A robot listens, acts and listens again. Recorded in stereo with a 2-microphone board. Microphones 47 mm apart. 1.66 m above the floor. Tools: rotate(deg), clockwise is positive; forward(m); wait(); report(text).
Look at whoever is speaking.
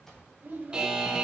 rotate(45)
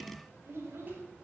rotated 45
rotate(85)
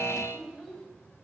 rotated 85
report("Facing the child speaking, 2 to 4 m away.")